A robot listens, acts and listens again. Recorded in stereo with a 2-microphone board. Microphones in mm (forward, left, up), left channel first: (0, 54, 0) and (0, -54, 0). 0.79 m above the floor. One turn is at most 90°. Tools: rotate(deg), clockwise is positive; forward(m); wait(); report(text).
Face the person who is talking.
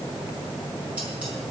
wait()
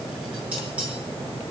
wait()
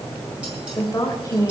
rotate(-30)
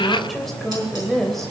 report("Found it: a woman speaking, straight ahead.")